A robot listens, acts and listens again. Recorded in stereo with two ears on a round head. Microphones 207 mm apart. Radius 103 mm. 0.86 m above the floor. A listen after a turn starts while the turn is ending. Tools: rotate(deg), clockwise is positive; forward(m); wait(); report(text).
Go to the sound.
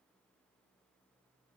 wait()
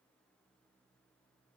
wait()
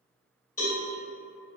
rotate(-35)
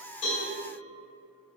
wait()
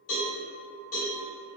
rotate(-110)
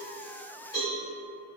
rotate(-20)
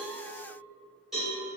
forward(1.0)
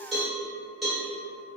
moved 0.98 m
forward(1.0)
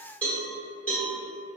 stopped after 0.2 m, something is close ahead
report("Arrived at the cowbell, straight ahead.")